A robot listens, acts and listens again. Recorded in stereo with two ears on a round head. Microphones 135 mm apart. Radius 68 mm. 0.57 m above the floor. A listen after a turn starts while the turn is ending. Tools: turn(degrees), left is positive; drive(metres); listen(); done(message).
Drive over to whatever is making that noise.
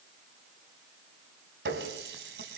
turn(degrees=-90)
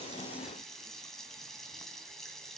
drive(metres=1.0)
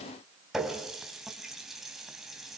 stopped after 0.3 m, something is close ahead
done("Blocked. The running tap is further on, straight ahead.")